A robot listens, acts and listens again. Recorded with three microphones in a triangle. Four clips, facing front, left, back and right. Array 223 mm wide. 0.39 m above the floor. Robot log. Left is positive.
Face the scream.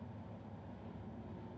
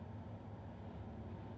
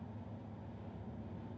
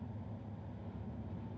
cmd idle
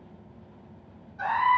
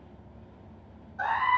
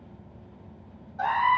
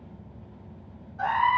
note: The scream: 175° left.
cmd yaw +175
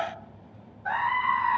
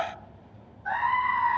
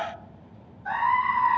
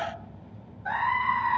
note: The scream is now 35° right.
cmd yaw -35
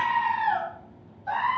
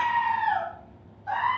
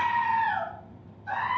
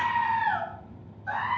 end: Facing the scream.